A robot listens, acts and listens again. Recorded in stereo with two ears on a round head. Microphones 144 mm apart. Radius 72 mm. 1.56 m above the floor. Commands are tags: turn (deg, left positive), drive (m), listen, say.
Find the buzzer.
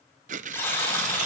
<turn deg="15"/>
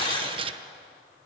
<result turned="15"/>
<turn deg="145"/>
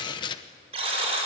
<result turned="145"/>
<turn deg="-40"/>
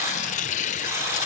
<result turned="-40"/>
<turn deg="-20"/>
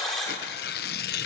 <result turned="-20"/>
<say>Facing the buzzer, over 4 m away.</say>